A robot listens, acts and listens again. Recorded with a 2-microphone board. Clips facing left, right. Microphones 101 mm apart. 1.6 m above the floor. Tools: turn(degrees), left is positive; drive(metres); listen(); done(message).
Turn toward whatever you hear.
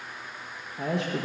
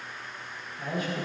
turn(degrees=70)
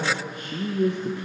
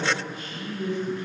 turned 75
turn(degrees=65)
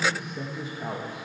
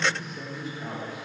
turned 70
turn(degrees=30)
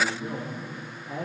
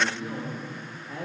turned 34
turn(degrees=10)
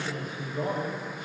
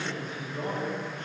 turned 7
done("Found it: a man speaking, straight ahead.")